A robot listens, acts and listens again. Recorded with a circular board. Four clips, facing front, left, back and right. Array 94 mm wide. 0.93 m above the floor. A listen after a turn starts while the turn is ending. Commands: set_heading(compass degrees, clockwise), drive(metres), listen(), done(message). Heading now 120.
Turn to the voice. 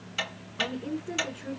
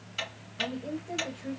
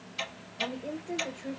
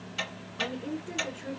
set_heading(155)
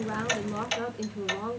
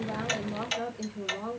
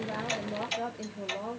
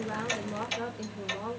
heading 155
done("Facing the woman speaking, 2 to 4 m away.")